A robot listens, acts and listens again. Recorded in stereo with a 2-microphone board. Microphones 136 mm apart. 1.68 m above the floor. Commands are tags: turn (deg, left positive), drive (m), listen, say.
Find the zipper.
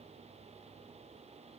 <listen/>
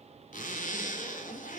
<turn deg="70"/>
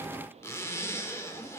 <turn deg="20"/>
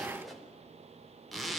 <say>Found it: a zipper, straight ahead, 2 to 4 m away.</say>